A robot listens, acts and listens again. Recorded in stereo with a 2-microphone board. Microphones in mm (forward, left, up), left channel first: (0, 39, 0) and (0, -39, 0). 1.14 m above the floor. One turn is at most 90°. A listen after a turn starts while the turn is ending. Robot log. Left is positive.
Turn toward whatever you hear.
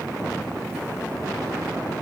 cmd idle
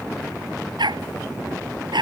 cmd yaw -90
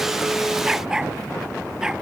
note: So it is at 10° right.
cmd yaw -10
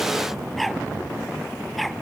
end: Facing the dog barking.